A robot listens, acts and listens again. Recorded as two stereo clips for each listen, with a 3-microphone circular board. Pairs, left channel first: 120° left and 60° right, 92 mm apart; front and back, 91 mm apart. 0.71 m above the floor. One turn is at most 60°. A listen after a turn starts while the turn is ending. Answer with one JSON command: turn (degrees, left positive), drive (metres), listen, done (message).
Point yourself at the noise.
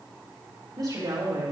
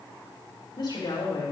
{"turn": -30}
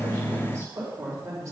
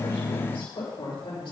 {"turn": -10}
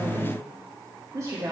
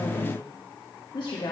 {"turn": -20}
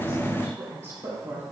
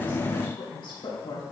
{"turn": -15}
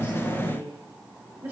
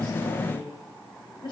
{"done": "Found it: a woman speaking, straight ahead."}